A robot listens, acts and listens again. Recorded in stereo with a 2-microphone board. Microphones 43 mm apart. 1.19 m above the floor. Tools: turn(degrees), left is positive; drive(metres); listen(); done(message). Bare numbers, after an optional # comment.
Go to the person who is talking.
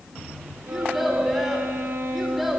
turn(-30)
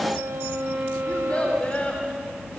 # So it is at 30° left.
turn(30)
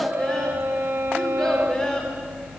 # The child speaking is now 15° left.
turn(15)
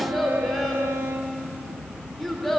drive(1.0)
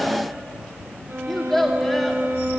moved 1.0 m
# The child speaking is now 10° left.
turn(10)
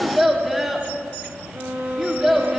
drive(1.0)
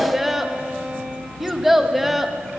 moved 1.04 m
drive(1.0)
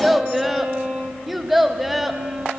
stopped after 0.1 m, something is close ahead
done("I am next to the child speaking.")